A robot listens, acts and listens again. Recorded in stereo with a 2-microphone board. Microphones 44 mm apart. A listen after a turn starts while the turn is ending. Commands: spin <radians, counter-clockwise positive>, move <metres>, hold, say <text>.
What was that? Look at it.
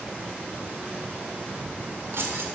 spin -1.05
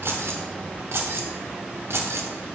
spin -1.31
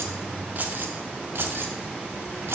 spin -1.22
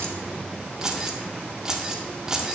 spin -0.26
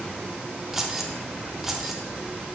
spin -0.17
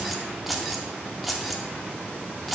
say Facing the keys jangling, 1 to 2 m away.